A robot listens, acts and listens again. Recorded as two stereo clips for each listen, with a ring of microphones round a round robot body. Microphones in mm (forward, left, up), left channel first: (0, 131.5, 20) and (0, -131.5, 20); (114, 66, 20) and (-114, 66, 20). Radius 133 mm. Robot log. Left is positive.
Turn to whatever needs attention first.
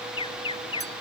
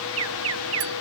note: The alarm: 160° left.
cmd yaw +160
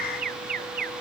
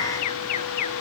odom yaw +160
note: The alarm is now 30° right.
cmd yaw -30
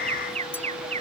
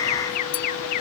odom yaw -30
note: The alarm is now 20° right.
cmd yaw -20
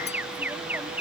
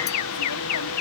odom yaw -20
end: Facing the alarm.